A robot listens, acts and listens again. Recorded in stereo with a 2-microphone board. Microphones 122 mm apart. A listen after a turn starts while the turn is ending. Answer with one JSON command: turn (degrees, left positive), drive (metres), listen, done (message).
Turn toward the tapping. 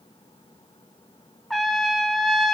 {"listen": true}
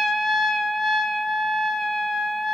{"listen": true}
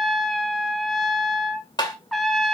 {"turn": 35}
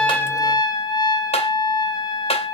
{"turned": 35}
{"turn": 110}
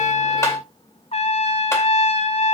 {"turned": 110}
{"listen": true}
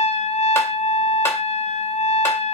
{"listen": true}
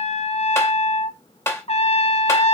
{"turn": 25}
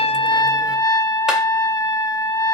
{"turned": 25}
{"listen": true}
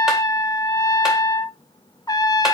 {"listen": true}
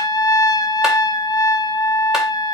{"done": "I heard tapping from this way, but can't make it out now."}